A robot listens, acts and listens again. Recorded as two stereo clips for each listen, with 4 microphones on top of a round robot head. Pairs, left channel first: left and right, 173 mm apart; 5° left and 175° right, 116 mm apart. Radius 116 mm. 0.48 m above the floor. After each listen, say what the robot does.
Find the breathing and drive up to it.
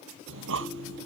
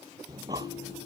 Turn 105° right.
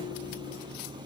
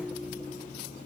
Turn 25° right.
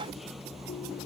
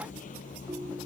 Drive 1.0 m forward.
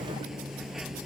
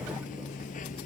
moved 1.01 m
Drive 1.0 m forward.
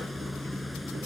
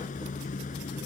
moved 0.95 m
Drive 1.0 m forward.
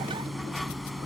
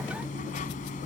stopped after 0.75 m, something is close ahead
Arrived at the breathing, straight ahead.